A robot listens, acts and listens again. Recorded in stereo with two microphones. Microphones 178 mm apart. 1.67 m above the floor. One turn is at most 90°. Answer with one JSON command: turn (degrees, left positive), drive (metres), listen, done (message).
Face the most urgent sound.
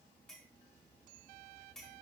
{"listen": true}
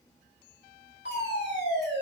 {"turn": 90}
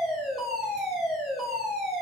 {"done": "Facing the fire alarm, over 4 m away."}